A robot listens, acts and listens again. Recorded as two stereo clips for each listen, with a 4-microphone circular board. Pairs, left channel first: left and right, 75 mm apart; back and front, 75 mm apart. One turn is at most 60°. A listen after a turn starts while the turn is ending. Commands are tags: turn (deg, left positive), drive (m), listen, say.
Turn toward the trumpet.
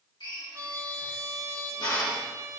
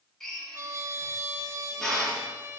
<turn deg="-45"/>
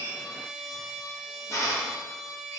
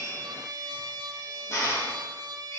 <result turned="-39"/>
<say>Facing the trumpet.</say>